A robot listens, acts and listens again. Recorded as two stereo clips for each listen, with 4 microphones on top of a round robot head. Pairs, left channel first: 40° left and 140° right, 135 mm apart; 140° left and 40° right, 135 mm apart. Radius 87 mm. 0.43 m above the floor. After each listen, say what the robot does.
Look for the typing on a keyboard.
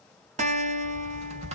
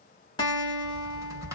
Turn 105° right.
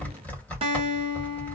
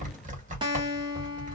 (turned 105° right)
Turn 35° right.
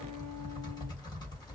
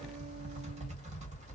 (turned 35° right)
Turn 15° right.
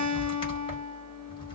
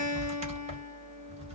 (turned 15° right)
Found it: typing on a keyboard, straight ahead, 1 to 2 m away.